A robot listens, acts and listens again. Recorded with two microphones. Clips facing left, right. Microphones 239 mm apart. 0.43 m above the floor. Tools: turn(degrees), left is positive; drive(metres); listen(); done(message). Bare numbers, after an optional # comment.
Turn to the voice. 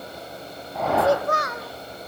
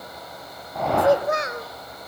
# The child speaking: about 25° right or 155° right.
turn(-25)
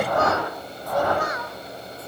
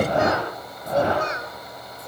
# The child speaking: about 25° right or 155° right.
turn(-25)
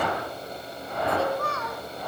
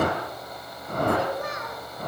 # The child speaking: about 20° right or 160° right.
turn(-20)
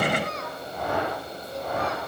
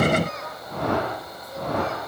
done("Found it: a child speaking, straight ahead, 2 to 4 m away.")